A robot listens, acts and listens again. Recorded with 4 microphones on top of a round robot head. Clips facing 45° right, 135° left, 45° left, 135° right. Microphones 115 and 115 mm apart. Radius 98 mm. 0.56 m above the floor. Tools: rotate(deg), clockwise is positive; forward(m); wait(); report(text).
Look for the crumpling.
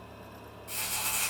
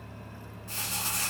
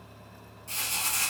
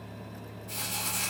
rotate(-45)
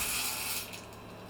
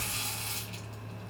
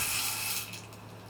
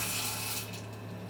report("Found it: crumpling, straight ahead, 2 to 4 m away.")